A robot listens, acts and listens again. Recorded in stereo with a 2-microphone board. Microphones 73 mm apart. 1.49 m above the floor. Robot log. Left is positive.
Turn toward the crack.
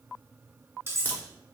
note: The crack: about 25° left or 155° left.
cmd yaw +25
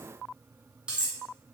cmd idle
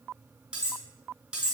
end: I heard a crack, but can't make it out now. It was about straight ahead or 130° left.